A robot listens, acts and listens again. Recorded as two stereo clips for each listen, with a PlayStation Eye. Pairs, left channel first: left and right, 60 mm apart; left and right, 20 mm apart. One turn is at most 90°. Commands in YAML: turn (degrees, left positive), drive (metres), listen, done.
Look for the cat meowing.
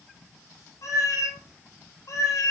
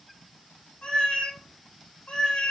turn: 70
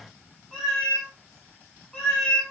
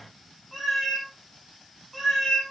turn: 15
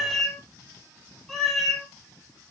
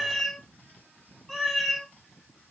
done: "Facing the cat meowing, 2 to 4 m away."